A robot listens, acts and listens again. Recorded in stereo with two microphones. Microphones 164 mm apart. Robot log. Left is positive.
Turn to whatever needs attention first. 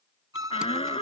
note: The shout: about 35° left or 145° left.
cmd yaw +35
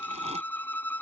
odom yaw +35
cmd idle
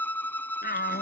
note: So it is at 110° left.
cmd yaw +110
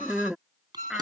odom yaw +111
end: Facing the shout.